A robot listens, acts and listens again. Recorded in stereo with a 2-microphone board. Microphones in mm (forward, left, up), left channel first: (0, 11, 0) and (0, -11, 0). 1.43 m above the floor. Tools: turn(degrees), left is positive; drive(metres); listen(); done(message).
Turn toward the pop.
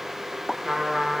turn(degrees=25)
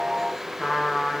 listen()
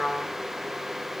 done("I heard a pop, but can't make it out now. It was about straight ahead or 130° left.")